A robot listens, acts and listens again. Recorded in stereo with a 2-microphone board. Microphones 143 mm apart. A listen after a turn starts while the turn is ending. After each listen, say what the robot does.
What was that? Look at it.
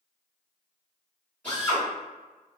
Turn 30° left.
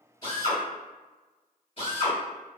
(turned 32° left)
Turn 135° left.
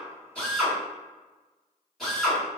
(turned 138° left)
Facing the drill.